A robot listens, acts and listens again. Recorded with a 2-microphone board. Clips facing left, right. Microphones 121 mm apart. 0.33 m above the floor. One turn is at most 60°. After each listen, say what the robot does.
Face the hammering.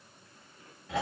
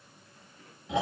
Keep listening.
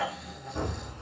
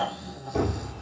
Turn 60° right.
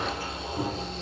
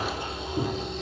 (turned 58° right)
Turn 20° right.
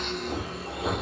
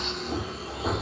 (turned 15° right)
Found it: hammering, straight ahead, 2 to 4 m away.